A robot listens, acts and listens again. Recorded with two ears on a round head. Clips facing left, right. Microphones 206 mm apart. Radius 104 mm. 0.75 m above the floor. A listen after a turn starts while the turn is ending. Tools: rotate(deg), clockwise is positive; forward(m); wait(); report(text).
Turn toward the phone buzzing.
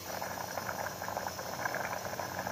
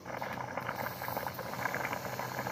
wait()
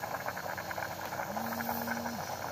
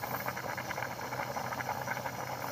wait()
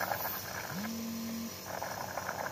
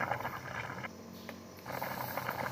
rotate(-55)
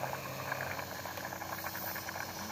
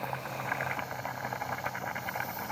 wait()
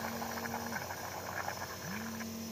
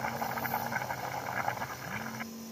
report("Found it: a phone buzzing, straight ahead.")